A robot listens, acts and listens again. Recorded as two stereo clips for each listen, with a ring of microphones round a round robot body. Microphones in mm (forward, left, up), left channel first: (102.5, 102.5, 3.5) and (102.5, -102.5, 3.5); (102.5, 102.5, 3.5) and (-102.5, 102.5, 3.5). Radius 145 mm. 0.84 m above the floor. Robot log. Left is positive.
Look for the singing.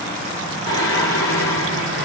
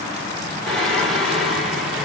note: The singing: 90° left.
cmd yaw +90
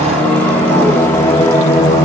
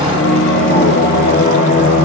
note: The singing is now 15° left.
cmd yaw +15
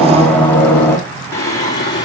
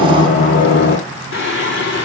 note: The singing is now 20° left.
cmd yaw +20
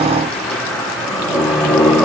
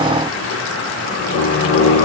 end: Facing the singing.